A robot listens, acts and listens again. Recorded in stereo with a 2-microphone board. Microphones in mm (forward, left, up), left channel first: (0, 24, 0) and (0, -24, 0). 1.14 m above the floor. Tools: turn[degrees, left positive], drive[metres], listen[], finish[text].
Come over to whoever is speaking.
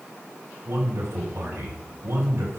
Thought: The man speaking: about 60° right or 120° right.
Action: turn[-60]
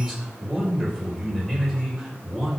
Action: drive[1.0]
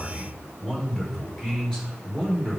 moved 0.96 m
Thought: The man speaking is now 10° left.
Action: turn[10]
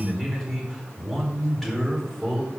Action: drive[1.0]
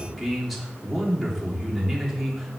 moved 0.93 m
Action: drive[1.0]
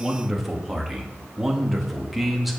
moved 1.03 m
Action: drive[1.0]
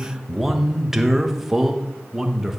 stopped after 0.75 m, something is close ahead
Thought: The man speaking is now 10° right.
Action: turn[-10]
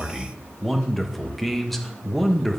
Action: finish[Arrived at the man speaking, straight ahead.]